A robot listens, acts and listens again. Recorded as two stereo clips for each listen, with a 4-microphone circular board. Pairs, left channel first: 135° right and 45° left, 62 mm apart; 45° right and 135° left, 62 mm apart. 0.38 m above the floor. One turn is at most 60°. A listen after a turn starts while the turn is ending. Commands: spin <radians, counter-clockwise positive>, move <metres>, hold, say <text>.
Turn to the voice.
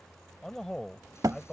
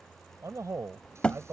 spin 1.05
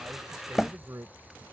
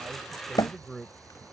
spin 0.70
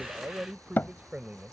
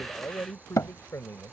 spin -0.35
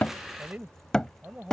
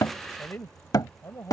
spin -0.26
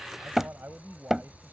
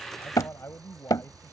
say Found it: a man speaking, straight ahead.